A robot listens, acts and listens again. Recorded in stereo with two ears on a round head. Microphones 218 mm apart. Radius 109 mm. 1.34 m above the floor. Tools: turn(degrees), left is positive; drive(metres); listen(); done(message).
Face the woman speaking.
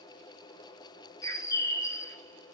listen()
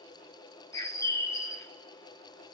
listen()
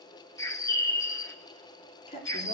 turn(degrees=25)
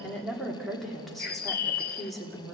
done("Found it: a woman speaking, straight ahead.")